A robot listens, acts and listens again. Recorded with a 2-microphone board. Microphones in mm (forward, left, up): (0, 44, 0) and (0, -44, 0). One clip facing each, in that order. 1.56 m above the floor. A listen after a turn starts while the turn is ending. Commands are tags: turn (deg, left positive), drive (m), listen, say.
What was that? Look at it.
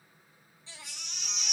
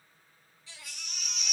<turn deg="30"/>
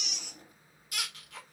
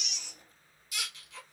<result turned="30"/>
<turn deg="115"/>
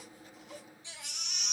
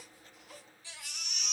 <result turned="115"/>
<turn deg="25"/>
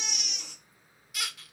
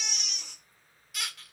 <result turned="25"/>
<say>Found it: a baby crying, straight ahead.</say>